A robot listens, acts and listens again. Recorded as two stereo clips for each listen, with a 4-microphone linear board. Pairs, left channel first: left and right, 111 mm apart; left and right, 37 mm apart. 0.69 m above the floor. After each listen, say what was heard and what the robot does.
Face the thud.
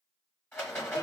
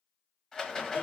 Keep listening.
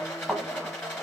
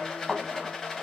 Turn 30° left.
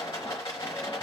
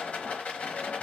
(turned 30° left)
Keep listening.
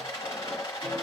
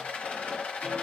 I heard a thud, but can't make it out now. It was about 25° right or 145° left.